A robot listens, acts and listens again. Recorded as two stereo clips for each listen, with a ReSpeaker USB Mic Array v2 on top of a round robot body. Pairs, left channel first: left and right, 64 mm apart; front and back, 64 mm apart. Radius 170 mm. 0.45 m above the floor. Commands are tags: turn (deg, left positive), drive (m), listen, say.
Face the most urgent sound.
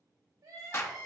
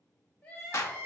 <turn deg="-70"/>
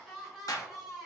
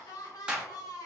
<turn deg="-10"/>
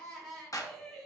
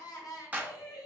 <say>Found it: crying, straight ahead.</say>